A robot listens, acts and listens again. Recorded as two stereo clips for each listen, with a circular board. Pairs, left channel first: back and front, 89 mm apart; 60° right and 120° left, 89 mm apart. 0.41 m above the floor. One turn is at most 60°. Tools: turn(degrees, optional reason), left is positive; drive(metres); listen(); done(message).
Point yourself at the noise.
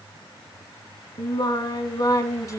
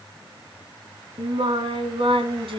turn(degrees=60, reason="The singing: 125° left.")
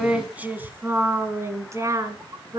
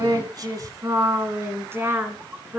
turn(degrees=50, reason="The singing is now 50° left.")
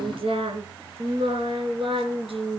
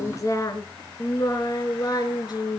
turn(degrees=-20, reason="The singing is now 20° right.")
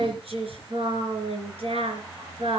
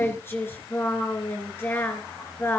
done("Found it: singing, straight ahead.")